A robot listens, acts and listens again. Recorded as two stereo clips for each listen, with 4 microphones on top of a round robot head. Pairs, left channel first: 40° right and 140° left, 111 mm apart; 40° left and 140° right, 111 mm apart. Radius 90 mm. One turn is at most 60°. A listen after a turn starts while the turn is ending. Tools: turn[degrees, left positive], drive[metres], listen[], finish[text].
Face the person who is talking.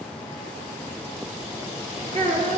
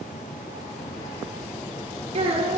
Thought: The child speaking: 175° right.
Action: turn[-60]
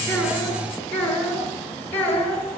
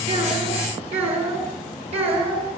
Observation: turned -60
Thought: The child speaking is now 110° right.
Action: turn[-60]
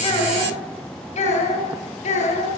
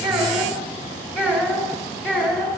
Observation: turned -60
Thought: The child speaking is now 60° right.
Action: turn[-60]
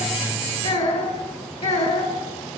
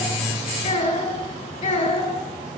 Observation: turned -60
Action: finish[Facing the child speaking, over 4 m away.]